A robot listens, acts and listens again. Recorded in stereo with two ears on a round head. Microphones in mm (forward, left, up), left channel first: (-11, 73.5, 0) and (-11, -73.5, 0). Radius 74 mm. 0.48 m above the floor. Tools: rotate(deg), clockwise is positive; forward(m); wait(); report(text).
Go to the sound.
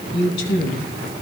rotate(-90)
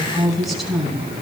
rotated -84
forward(1.0)
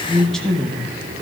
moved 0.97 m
forward(1.0)
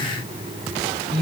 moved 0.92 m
forward(1.0)
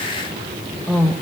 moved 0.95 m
rotate(-10)
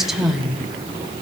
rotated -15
forward(1.0)
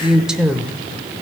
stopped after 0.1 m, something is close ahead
report("Arrived at the woman speaking, straight ahead.")